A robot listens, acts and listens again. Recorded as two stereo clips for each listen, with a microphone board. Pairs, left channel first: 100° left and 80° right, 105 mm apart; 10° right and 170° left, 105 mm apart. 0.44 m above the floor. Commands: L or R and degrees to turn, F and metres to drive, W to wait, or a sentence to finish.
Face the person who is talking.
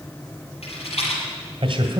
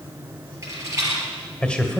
R90
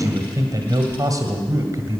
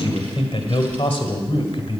R30
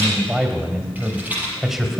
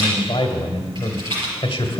L10
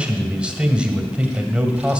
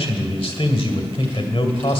Found it: a man speaking, straight ahead.